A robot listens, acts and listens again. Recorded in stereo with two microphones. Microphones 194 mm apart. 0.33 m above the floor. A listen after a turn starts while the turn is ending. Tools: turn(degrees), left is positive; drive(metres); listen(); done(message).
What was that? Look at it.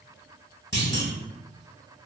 turn(degrees=65)
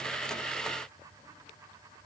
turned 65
listen()
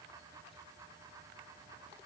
done("I heard a clunk, but can't make it out now. It was about straight ahead or 50° left.")